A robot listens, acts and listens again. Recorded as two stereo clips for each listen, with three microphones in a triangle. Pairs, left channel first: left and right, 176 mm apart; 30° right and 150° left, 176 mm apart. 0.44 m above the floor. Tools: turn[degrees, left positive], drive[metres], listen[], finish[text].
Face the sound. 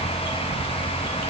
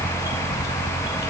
Action: listen[]
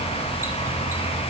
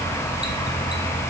Action: listen[]
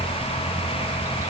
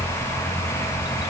Action: finish[I can't make out anything to turn to.]